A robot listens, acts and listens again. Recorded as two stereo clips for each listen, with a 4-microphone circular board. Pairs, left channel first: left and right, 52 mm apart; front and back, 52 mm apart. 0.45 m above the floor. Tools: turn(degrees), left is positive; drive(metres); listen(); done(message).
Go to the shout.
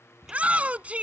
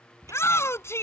turn(degrees=-30)
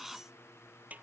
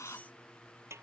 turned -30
listen()
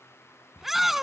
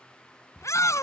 drive(metres=1.0)
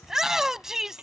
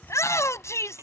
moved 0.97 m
turn(degrees=-10)
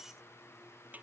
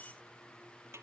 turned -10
listen()
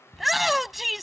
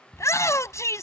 drive(metres=1.0)
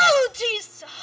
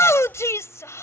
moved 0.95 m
drive(metres=1.0)
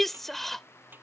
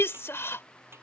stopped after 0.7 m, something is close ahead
done("I am next to the shout.")